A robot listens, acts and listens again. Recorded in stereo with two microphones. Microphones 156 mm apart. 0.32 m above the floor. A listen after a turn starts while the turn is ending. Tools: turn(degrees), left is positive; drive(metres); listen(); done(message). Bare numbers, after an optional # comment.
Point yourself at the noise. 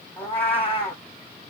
turn(30)
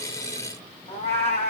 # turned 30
# So it is at 140° left.
turn(140)
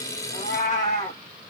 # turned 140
# The cat meowing is now 50° left.
turn(50)
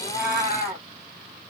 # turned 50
# The cat meowing is now 15° right.
turn(-15)
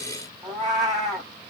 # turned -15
done("Found it: a cat meowing, straight ahead.")